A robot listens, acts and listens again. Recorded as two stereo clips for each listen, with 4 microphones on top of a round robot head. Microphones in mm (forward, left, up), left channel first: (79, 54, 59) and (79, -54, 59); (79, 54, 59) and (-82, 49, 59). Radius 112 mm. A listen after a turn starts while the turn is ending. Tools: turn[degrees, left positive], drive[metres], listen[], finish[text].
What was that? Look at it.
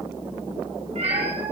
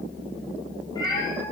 Thought: The cat meowing: 70° right.
Action: turn[-70]
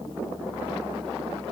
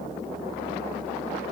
Action: listen[]
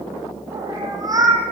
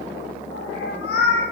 Thought: The cat meowing is now 35° right.
Action: turn[-35]
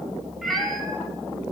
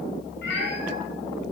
Action: finish[Found it: a cat meowing, straight ahead.]